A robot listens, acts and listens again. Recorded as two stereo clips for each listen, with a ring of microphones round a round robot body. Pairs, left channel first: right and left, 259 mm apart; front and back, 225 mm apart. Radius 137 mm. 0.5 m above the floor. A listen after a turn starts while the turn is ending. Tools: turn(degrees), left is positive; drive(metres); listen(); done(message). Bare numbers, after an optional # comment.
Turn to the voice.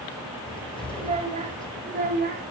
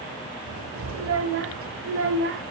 # The child speaking: 145° left.
turn(145)
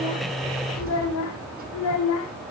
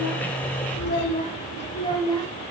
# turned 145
# The child speaking is now 75° right.
turn(-75)
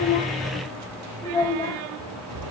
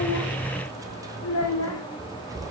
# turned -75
# The child speaking is now 15° right.
turn(-15)
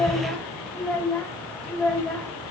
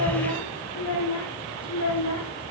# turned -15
done("Found it: a child speaking, straight ahead, 1 to 2 m away.")